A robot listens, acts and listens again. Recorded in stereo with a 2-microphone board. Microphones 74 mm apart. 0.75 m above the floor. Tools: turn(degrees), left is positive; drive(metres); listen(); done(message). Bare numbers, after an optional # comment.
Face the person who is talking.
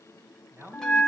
# The man speaking: about 30° right or 150° right.
turn(-30)
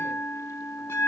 listen()
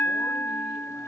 listen()
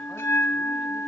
done("I heard a man speaking, but can't make it out now. It was about straight ahead or 120° right.")